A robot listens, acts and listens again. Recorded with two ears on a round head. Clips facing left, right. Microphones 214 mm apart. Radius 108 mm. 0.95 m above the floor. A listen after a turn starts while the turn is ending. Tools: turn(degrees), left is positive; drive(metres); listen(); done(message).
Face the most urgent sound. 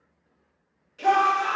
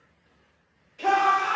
turn(degrees=30)
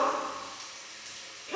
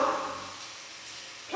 turn(degrees=140)
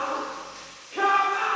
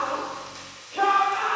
turn(degrees=35)
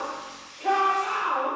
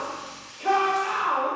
turn(degrees=-20)
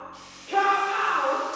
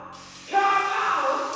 done("Found it: a shout, straight ahead.")